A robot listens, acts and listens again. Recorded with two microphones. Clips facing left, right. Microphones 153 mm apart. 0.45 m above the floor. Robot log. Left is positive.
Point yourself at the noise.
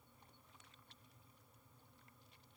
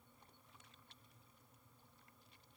cmd idle
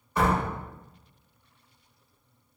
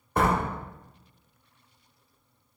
note: The door slam: about 50° right or 130° right.
cmd yaw -50
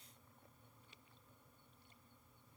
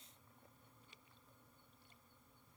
cmd idle
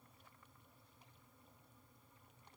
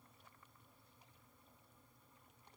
end: I heard a door slam, but can't make it out now. It was about straight ahead or 80° right.